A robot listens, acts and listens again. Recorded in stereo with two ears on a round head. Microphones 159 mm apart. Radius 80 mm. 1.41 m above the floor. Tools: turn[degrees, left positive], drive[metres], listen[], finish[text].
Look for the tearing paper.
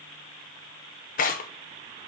Thought: The tearing paper: about 50° left or 130° left.
Action: turn[50]
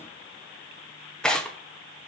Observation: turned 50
Action: finish[Found it: tearing paper, straight ahead.]